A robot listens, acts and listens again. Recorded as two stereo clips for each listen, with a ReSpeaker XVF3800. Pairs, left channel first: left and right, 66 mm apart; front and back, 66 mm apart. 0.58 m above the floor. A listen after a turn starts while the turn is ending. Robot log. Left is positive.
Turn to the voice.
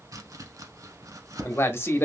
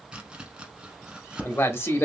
note: The man speaking: 40° left.
cmd yaw +40
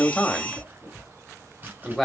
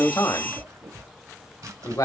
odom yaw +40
end: Facing the man speaking, 1 to 2 m away.